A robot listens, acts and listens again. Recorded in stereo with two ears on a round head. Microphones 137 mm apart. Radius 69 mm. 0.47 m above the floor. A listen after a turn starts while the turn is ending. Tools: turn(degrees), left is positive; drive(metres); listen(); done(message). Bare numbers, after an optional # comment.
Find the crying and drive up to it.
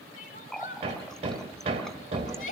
# The crying: about 55° left or 125° left.
turn(55)
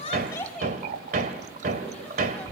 # So it is at 10° left.
turn(10)
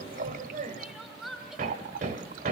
drive(1.0)
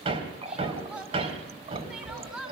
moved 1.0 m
# The crying is now 10° right.
turn(-10)
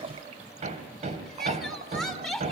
drive(1.0)
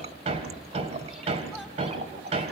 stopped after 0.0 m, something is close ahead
listen()
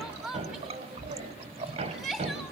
done("Arrived at the crying, straight ahead.")